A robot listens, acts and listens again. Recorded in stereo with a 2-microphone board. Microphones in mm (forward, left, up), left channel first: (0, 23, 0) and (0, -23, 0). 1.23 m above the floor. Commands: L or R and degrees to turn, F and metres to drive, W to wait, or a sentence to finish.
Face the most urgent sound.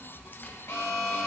L60
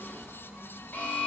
L45
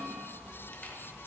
W
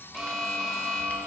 Facing the alarm, 1 to 2 m away.